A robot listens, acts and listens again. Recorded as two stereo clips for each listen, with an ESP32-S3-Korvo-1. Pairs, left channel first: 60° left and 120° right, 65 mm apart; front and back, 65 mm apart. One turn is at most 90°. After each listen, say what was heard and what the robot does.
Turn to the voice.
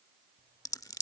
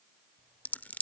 Keep listening.
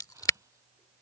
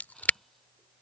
Keep listening.
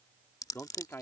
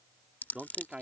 The man speaking: 110° left. Turn 90° left.
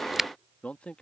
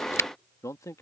The man speaking is now 10° right. Turn 10° right.
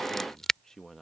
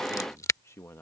The man speaking is now 30° right. Turn 30° right.
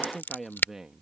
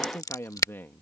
The man speaking is now 40° right. Turn 40° right.
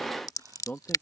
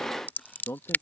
The man speaking is now 10° left. Turn 10° left.
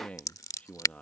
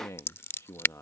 Found it: a man speaking, straight ahead.